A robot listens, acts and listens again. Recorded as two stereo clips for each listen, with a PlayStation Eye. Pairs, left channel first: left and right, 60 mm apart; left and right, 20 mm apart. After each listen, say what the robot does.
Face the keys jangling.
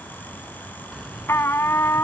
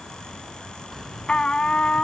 Turn 30° right.
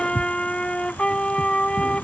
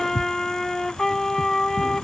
Turn 15° left.
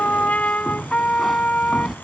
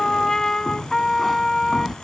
Found it: keys jangling, straight ahead.